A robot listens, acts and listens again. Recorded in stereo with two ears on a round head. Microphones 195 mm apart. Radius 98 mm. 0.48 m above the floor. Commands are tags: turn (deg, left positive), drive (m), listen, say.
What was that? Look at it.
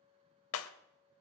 <turn deg="75"/>
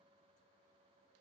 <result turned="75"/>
<listen/>
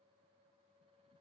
<say>I heard breaking glass, but can't make it out now. It was about straight ahead or 30° left.</say>